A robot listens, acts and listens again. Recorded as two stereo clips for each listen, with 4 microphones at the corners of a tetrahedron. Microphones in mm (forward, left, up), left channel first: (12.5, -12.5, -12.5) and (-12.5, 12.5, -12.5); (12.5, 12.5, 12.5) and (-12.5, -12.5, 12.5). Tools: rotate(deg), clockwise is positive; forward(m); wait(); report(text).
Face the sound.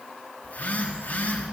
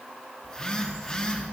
rotate(25)
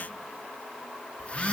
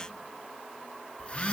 report("Facing the phone buzzing.")